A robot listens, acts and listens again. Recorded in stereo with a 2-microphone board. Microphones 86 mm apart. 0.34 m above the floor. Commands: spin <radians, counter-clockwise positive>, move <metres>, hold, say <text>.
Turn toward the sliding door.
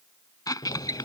spin 1.31
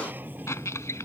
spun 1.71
spin -0.35
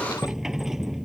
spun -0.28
say Found it: a sliding door, straight ahead.